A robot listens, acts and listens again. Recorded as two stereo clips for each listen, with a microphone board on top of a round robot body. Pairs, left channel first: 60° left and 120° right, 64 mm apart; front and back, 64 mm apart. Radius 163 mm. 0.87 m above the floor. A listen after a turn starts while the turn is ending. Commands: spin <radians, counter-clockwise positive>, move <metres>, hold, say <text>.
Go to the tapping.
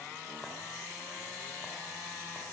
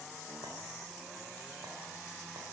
hold
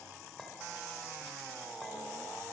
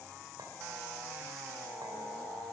hold
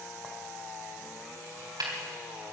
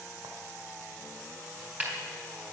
spin -2.01
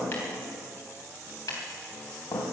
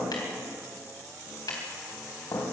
spin 0.35
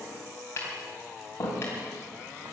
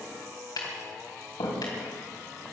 move 1.0
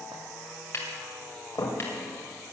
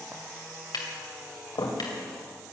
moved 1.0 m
spin 0.17
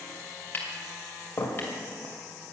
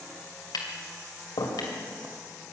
move 1.0
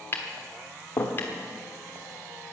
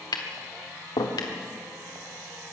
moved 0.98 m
move 1.0
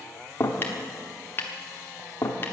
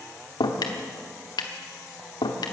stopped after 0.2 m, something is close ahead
say Arrived at the tapping, straight ahead.